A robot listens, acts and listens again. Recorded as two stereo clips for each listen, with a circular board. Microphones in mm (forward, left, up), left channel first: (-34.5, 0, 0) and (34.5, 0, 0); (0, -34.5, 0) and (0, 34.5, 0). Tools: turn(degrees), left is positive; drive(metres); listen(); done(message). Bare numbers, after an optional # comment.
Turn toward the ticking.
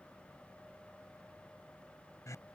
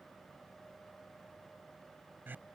listen()
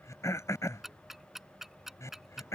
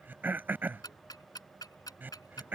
# The ticking: 85° right.
turn(-85)
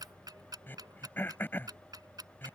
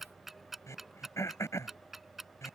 done("Found it: ticking, straight ahead.")